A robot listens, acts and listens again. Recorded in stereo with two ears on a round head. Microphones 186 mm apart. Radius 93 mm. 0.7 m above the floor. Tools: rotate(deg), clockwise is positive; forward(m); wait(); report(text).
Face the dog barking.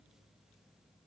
wait()
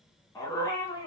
rotate(-20)
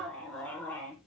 rotate(-30)
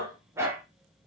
rotate(10)
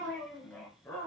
rotate(-10)
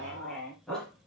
report("Facing the dog barking.")